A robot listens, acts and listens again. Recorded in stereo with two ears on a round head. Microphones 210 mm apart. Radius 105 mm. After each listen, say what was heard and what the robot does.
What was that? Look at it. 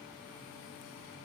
Keep listening.
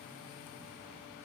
Keep listening.
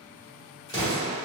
The explosion: about 20° left or 160° left. Turn 20° left.
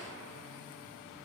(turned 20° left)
Keep listening.
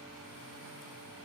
I heard an explosion, but can't make it out now. It was about straight ahead or 140° left.